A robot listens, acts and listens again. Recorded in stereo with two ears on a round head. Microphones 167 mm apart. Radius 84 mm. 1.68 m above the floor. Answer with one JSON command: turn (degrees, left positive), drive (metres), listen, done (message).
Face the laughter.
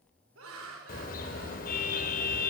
{"turn": -90}
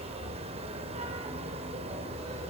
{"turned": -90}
{"listen": true}
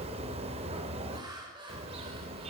{"turn": -25}
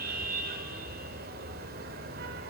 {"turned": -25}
{"listen": true}
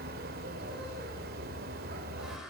{"listen": true}
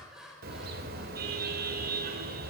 {"done": "Found it: laughter, straight ahead."}